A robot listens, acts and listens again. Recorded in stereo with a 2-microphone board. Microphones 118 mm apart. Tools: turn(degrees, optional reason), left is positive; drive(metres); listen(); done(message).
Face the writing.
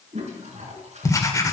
turn(degrees=30, reason="The writing: about 30° left or 150° left.")
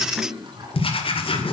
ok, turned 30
turn(degrees=115, reason="So it is at 115° left.")
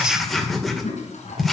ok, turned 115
done("Facing the writing.")